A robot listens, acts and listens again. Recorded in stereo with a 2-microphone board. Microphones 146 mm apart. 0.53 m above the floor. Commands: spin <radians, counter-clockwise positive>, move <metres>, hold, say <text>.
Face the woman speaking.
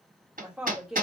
spin -0.52
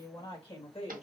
spin 0.79
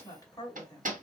spin 0.52
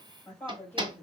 spin 0.26
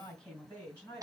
spin 0.17
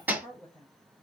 say Facing the woman speaking.